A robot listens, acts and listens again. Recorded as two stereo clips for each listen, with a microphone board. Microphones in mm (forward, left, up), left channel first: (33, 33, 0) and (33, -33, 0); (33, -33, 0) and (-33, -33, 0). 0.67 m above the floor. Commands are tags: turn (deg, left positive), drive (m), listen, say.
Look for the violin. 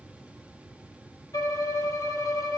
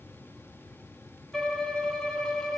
<turn deg="85"/>
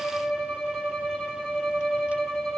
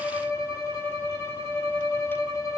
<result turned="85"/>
<turn deg="10"/>
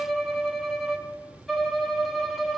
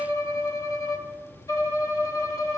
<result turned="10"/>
<say>Found it: a violin, straight ahead, under 1 m away.</say>